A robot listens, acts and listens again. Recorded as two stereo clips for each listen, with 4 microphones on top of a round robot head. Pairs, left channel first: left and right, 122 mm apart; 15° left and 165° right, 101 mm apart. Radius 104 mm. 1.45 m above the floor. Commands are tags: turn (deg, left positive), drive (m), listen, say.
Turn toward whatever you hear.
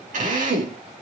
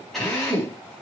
<turn deg="-75"/>
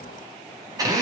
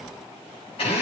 <turn deg="-30"/>
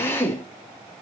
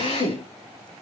<turn deg="20"/>
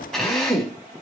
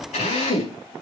<say>Facing the drill, over 4 m away.</say>